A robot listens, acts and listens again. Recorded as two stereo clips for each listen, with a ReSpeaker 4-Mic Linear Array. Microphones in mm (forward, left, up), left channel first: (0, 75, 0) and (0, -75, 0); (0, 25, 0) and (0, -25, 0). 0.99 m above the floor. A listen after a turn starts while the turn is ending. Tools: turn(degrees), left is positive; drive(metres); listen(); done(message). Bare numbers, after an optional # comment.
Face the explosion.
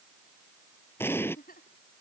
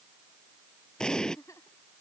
# The explosion: about 15° left or 165° left.
turn(15)
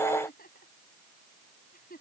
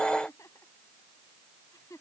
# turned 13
listen()
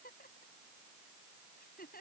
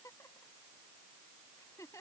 done("I heard an explosion, but can't make it out now. It was about straight ahead or 150° left.")